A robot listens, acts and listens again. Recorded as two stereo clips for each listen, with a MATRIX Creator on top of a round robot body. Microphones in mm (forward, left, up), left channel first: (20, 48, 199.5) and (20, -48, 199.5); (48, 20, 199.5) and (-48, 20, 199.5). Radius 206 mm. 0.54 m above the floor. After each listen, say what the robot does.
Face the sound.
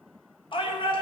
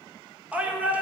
Turn 105° left.
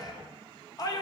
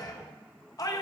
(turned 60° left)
Turn 45° left.
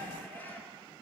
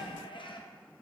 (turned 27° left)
Turn 20° left.
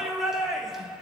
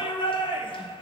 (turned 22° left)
Found it: a shout, straight ahead.